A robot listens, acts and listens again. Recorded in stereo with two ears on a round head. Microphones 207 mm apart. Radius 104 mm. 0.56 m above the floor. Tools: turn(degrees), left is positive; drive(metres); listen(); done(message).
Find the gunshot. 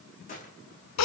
turn(degrees=35)
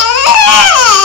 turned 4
listen()
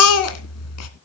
done("I heard a gunshot, but can't make it out now. It was about 30° left or 140° left.")